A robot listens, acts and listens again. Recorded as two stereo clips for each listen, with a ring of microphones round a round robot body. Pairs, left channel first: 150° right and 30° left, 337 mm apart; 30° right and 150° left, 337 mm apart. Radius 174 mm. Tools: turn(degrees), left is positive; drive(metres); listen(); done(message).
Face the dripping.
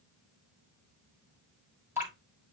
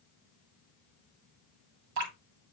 turn(degrees=115)
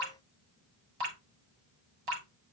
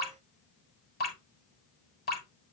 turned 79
turn(degrees=35)
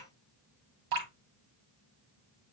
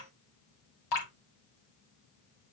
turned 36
done("Found it: dripping, straight ahead, 2 to 4 m away.")